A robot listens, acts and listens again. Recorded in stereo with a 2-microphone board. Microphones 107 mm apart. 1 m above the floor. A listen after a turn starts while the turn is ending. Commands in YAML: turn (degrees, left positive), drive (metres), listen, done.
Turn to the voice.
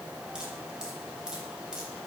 listen: true
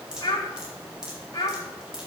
turn: 35
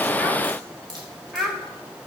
done: "Found it: a child speaking, straight ahead, 2 to 4 m away."